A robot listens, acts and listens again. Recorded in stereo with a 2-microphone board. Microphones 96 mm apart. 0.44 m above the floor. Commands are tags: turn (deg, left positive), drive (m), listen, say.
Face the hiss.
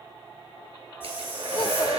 <turn deg="25"/>
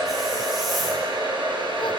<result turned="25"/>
<listen/>
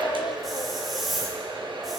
<say>Found it: a hiss, straight ahead.</say>